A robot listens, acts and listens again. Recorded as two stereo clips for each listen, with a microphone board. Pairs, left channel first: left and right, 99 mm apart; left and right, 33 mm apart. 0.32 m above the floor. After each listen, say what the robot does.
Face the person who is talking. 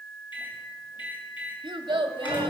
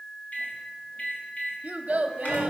Turn 60° right.
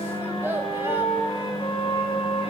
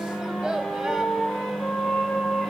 Keep listening.
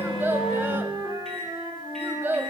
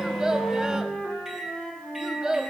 Turn 25° right.
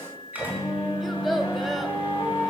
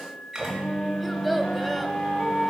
Facing the child speaking, under 1 m away.